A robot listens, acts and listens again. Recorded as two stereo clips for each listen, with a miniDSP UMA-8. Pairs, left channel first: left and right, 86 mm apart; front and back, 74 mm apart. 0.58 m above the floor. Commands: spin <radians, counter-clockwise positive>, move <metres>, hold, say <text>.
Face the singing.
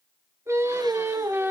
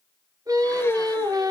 spin -2.71
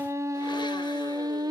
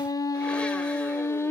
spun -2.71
spin -0.96
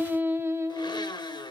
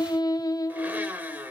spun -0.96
spin -0.70
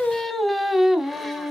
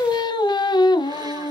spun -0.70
spin -0.17
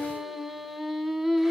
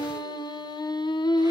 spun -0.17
say Facing the singing, 1 to 2 m away.